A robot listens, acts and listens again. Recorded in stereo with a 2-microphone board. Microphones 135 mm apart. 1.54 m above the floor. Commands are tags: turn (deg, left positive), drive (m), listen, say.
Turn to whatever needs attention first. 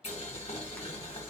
<listen/>
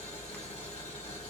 <listen/>
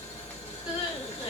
<turn deg="45"/>
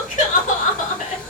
<turn deg="85"/>
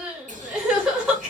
<say>Facing the crying.</say>